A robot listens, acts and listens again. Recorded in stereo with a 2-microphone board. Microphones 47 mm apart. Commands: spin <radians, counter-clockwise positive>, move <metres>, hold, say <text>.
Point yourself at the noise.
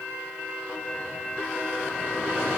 hold
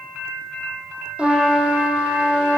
spin -0.44
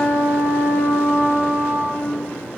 spin -2.27
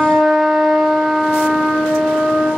say Facing the trumpet.